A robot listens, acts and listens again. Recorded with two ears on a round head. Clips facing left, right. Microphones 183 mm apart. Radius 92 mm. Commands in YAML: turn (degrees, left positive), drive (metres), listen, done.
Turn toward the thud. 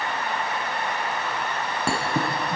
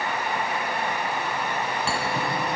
turn: 45
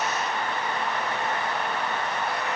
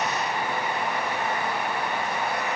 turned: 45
listen: true
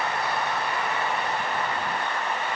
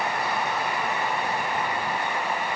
done: "I heard a thud, but can't make it out now. It was about straight ahead or 90° left."